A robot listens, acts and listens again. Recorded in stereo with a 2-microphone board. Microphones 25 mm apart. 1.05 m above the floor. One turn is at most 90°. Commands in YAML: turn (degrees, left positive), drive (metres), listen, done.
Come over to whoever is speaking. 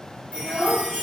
turn: -30
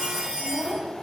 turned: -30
turn: -90
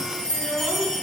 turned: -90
turn: -85
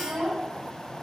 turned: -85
turn: -35
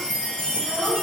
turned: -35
listen: true
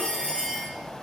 listen: true
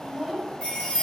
drive: 1.0
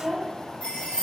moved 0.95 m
drive: 1.0
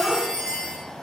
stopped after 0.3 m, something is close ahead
done: "Arrived at the child speaking, straight ahead."